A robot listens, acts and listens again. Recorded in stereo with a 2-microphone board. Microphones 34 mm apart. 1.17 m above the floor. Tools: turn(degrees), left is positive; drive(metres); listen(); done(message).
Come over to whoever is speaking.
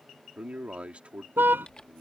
turn(degrees=-40)
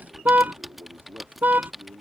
turn(degrees=-105)
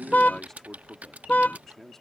turn(degrees=15)
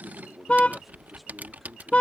drive(metres=1.0)
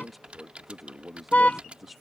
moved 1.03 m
drive(metres=1.0)
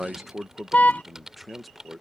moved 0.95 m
drive(metres=1.0)
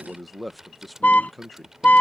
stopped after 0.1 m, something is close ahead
done("I am next to the man speaking.")